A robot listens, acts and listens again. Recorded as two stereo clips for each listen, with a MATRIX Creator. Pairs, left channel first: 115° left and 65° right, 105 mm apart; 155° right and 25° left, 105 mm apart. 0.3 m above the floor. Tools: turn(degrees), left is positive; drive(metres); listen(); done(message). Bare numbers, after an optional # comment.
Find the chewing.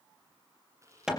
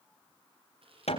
done("Found it: chewing, straight ahead, over 4 m away.")